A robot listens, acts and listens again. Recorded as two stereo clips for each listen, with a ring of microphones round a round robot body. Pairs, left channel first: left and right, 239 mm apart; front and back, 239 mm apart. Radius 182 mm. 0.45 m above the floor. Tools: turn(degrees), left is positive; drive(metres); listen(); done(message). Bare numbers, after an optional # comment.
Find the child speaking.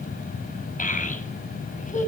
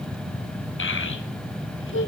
# The child speaking: 30° left.
turn(30)
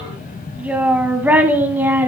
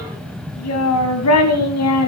# The child speaking is now 10° right.
turn(-10)
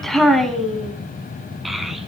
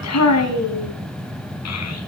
done("Facing the child speaking, over 4 m away.")